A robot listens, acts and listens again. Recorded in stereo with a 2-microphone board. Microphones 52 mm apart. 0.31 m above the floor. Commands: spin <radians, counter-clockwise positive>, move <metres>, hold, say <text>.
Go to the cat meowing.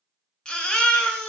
hold
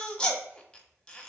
hold
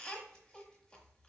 say I can't make out a cat meowing, only a baby crying.